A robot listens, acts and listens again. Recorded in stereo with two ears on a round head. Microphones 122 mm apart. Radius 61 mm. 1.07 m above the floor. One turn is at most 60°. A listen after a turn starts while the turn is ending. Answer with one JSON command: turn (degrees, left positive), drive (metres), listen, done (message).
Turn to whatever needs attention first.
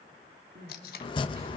{"turn": -60}
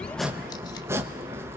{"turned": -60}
{"turn": -30}
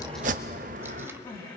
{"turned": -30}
{"turn": 30}
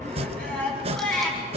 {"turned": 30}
{"turn": 10}
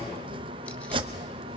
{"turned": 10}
{"listen": true}
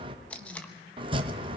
{"listen": true}
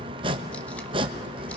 {"done": "Facing where the crying came from. I can't hear it now."}